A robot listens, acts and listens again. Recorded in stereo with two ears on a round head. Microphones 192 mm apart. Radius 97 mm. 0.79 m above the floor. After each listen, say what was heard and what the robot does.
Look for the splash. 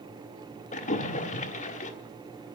The splash: about 35° left or 145° left. Turn 35° left.
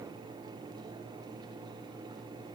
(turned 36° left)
Keep listening.
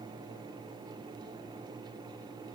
I heard a splash, but can't make it out now. It was about straight ahead or 110° left.